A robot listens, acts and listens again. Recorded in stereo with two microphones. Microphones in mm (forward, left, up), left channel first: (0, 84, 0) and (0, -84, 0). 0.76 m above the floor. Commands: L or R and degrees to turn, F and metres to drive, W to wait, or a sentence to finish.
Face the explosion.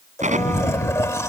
R50
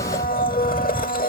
W
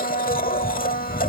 I heard an explosion, but can't make it out now. It was about straight ahead or 80° right.